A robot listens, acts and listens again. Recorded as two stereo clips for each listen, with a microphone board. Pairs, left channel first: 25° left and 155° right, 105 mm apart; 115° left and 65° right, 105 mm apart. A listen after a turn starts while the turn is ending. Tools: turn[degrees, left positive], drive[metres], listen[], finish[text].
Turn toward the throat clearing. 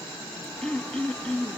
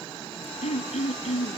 Thought: The throat clearing: 105° left.
Action: turn[105]
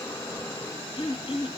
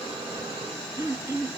Thought: The throat clearing is now 10° right.
Action: turn[-10]
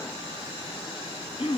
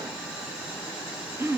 Action: finish[Facing the throat clearing.]